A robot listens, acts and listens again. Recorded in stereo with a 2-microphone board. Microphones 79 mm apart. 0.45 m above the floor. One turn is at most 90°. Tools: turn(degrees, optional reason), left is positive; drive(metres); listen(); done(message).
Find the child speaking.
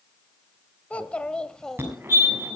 turn(degrees=30)
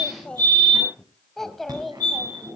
turn(degrees=30)
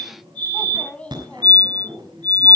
turn(degrees=15, reason="The child speaking: about 15° left or 165° left.")
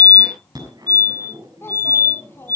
turn(degrees=90, reason="So it is at 145° left.")
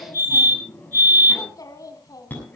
turn(degrees=50, reason="The child speaking is now 50° left.")
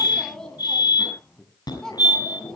done("Found it: a child speaking, straight ahead.")